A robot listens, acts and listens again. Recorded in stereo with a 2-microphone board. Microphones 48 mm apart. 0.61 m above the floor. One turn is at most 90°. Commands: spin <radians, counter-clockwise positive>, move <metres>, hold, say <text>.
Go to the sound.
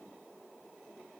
hold
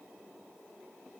hold
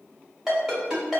spin -0.52
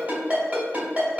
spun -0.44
spin -1.57
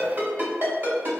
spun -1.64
spin -0.87
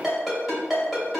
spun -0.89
move 1.0
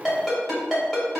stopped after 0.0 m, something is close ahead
say Blocked. The ringtone is further on, straight ahead.